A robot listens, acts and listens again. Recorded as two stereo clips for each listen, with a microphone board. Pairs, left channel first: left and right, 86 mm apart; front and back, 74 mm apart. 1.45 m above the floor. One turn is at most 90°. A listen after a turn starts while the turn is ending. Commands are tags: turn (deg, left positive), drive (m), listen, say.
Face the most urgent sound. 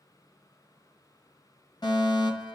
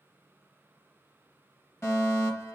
<turn deg="55"/>
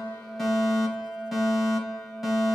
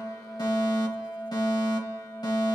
<say>Found it: a fire alarm, straight ahead.</say>